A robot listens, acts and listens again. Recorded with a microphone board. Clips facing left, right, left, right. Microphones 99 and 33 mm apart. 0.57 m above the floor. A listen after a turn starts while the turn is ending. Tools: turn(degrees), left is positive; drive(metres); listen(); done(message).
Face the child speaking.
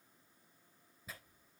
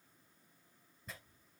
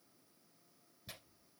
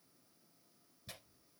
listen()
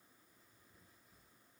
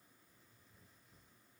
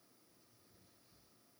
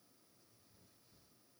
listen()
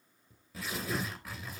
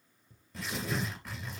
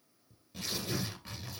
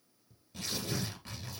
done("I can't make out a child speaking, only tearing paper.")